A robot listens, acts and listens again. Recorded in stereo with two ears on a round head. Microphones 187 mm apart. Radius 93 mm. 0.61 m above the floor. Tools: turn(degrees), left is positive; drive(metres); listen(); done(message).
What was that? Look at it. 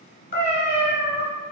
turn(degrees=35)
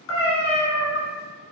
turn(degrees=110)
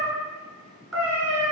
done("Found it: a cat meowing, straight ahead, 1 to 2 m away.")